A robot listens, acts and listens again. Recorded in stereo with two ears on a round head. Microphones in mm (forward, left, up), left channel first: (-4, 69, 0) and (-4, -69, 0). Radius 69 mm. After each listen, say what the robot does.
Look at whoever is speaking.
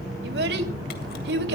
Turn 90° right.
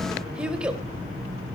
Facing the child speaking, 2 to 4 m away.